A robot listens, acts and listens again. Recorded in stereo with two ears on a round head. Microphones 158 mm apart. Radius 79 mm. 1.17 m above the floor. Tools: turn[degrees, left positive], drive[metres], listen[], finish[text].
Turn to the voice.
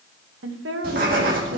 Thought: The woman speaking: about 75° right or 105° right.
Action: turn[-75]
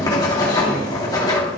Action: listen[]
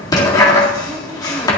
Action: listen[]
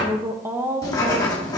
Thought: So it is at 15° right.
Action: turn[-15]
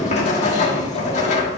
Action: listen[]
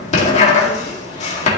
Action: listen[]
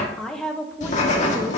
Action: finish[Facing the woman speaking.]